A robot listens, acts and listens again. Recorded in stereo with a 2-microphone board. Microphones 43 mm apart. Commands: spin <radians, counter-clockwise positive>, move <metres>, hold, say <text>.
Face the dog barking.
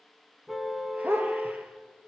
spin -1.22
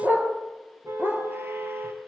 spin -1.05
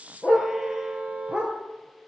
spin -0.44
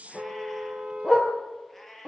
spin -0.26
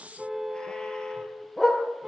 say Facing the dog barking.